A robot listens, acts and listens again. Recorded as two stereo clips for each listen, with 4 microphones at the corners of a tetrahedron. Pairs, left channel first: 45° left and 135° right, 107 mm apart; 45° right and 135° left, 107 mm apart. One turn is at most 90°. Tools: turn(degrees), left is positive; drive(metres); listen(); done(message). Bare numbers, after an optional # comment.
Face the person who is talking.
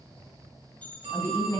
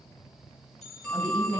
# The woman speaking: 95° left.
turn(90)
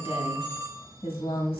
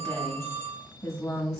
# The woman speaking is now 15° left.
turn(15)
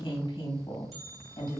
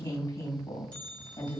done("Facing the woman speaking, 1 to 2 m away.")